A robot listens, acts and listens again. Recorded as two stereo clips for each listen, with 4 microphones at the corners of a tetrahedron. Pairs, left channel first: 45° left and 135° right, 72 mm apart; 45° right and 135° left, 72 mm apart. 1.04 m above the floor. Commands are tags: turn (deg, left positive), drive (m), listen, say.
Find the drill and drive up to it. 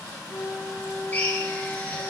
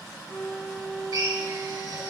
<turn deg="110"/>
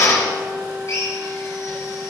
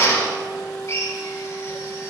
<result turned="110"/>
<drive m="1.0"/>
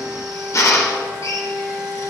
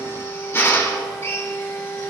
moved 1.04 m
<turn deg="10"/>
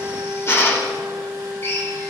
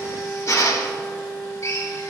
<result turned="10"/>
<drive m="1.0"/>
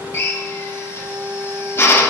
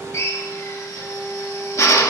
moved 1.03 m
<drive m="1.0"/>
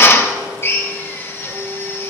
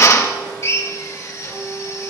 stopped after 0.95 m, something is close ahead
<say>I am next to the drill.</say>